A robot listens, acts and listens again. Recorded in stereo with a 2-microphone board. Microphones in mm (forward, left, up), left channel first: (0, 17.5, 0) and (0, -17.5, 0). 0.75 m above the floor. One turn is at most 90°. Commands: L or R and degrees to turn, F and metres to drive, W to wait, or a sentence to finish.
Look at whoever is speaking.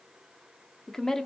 L30
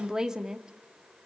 R20
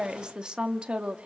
R35
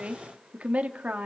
R45
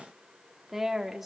R10
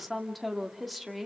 Found it: a woman speaking, straight ahead, 1 to 2 m away.